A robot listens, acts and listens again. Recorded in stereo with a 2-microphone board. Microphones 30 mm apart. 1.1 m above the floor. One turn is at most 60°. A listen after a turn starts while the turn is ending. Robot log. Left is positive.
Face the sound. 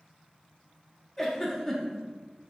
cmd yaw +30
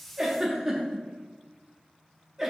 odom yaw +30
note: So it is at 20° right.
cmd yaw -20
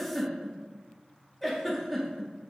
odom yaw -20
end: Facing the giggle.